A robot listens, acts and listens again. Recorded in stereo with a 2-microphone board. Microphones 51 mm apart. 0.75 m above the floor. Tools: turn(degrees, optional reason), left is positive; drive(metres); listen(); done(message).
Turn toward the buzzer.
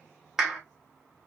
listen()
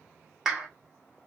listen()
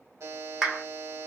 turn(degrees=-60, reason="The buzzer: about 60° right or 120° right.")
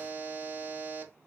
turn(degrees=-40, reason="So it is at 40° right.")
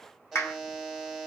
done("Facing the buzzer, 1 to 2 m away.")